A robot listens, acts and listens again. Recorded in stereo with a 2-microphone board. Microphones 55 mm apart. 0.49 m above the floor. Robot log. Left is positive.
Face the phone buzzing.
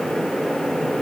cmd idle
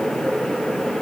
cmd idle
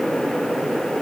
end: I can't make out a phone buzzing.